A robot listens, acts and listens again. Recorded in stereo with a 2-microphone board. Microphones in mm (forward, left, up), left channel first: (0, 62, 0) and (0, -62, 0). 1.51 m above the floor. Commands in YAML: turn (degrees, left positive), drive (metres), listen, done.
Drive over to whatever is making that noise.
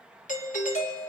turn: 90
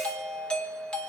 turn: 10
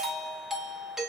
drive: 1.0
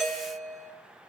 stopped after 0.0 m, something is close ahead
done: "Blocked. The doorbell is further on, straight ahead."